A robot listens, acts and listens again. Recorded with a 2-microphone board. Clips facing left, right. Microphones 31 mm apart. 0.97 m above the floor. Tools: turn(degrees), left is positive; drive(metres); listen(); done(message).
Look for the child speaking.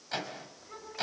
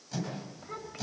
turn(degrees=-25)
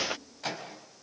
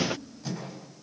turn(degrees=-130)
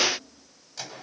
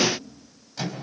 turn(degrees=-20)
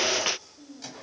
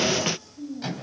done("Found it: a child speaking, straight ahead, 2 to 4 m away.")